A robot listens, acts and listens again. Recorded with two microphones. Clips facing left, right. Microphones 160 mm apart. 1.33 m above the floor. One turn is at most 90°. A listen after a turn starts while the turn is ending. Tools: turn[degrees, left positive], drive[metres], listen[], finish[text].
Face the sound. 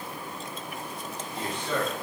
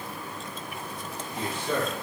Action: turn[-30]
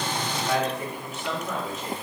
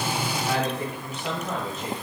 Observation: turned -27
Thought: So it is at 145° right.
Action: turn[-90]
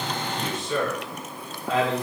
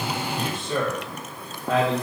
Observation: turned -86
Thought: The man speaking is now 55° right.
Action: turn[-55]
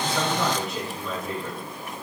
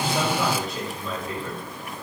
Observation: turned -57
Action: finish[Found it: a man speaking, straight ahead, 2 to 4 m away.]